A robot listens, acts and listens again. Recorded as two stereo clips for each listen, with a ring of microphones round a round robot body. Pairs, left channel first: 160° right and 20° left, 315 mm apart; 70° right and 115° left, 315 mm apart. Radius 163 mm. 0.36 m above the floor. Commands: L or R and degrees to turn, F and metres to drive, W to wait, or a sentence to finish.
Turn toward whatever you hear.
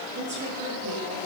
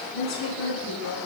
R35
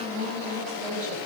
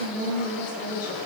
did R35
Found it: a woman speaking, straight ahead, over 4 m away.